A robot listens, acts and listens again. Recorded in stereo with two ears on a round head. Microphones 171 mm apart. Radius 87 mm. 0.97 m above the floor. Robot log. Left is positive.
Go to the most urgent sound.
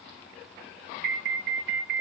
note: The alarm: about 45° right or 135° right.
cmd yaw -45
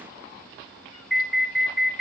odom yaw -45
cmd fwd 1.0
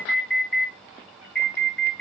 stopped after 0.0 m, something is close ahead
end: Blocked. The alarm is further on, straight ahead.